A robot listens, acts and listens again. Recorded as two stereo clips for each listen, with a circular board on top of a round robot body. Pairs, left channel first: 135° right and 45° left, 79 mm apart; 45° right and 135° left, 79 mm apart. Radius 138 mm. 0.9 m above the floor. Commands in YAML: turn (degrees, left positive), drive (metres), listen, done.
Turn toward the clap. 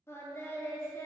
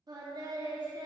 listen: true
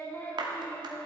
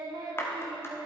turn: 15
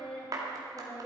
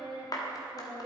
done: "Facing the clap."